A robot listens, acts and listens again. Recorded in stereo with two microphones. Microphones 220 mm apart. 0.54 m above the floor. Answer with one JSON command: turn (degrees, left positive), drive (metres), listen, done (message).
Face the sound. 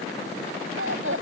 {"turn": -70}
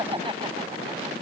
{"turn": -20}
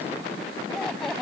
{"done": "Facing the laughter."}